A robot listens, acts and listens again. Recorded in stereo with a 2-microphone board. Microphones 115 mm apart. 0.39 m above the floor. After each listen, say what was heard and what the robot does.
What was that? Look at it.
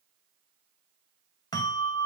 The bell: about 35° left or 145° left. Turn 35° left.
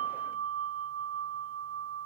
So it is at 10° left. Turn 10° left.
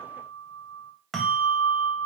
Found it: a bell, straight ahead.